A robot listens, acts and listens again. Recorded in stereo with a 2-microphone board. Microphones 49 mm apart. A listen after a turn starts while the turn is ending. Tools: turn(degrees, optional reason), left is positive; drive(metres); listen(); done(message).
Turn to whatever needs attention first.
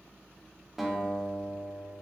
listen()
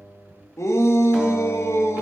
turn(degrees=90)
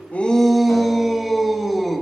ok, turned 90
done("Facing the shout.")